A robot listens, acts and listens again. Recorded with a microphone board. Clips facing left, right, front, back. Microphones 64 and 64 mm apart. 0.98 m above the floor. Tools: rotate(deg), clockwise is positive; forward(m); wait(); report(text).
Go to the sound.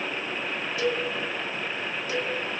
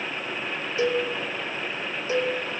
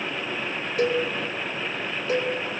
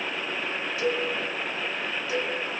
rotate(30)
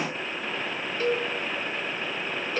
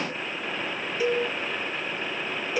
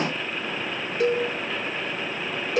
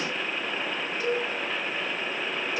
rotate(10)
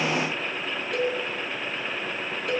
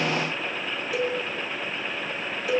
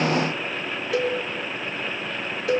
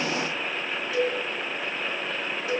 forward(1.0)
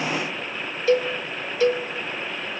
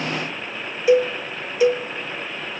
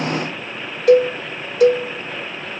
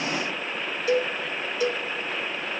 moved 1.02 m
rotate(15)
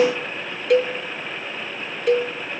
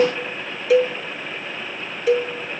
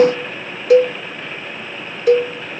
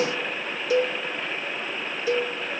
forward(1.0)
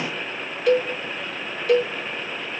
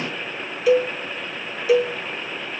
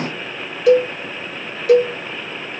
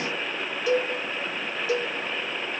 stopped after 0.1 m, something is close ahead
report("I am next to the cowbell.")